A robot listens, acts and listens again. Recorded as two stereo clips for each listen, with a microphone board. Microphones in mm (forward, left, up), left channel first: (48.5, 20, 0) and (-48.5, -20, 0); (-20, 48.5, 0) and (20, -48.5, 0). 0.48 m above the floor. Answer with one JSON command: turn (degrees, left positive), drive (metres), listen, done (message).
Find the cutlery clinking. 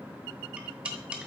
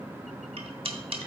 {"turn": -80}
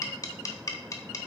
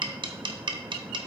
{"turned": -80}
{"turn": -30}
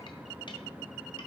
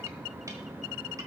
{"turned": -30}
{"listen": true}
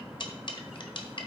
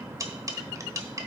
{"turn": -10}
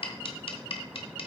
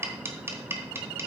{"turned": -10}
{"done": "Facing the cutlery clinking."}